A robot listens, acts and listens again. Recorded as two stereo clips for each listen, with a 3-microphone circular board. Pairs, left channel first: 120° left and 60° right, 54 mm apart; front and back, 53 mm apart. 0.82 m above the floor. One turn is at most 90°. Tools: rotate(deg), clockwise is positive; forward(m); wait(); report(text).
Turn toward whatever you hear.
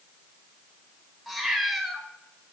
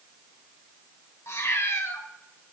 rotate(-30)
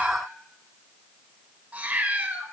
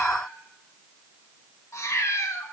report("Facing the cat meowing.")